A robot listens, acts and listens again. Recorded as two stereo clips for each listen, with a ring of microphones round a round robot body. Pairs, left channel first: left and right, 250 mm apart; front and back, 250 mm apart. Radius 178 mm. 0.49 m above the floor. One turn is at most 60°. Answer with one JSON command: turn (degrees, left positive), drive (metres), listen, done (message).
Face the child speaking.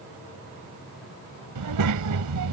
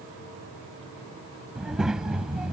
{"turn": -60}
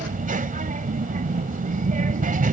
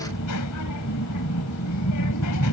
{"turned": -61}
{"turn": -30}
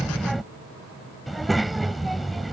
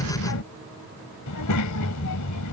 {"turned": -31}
{"done": "Facing the child speaking."}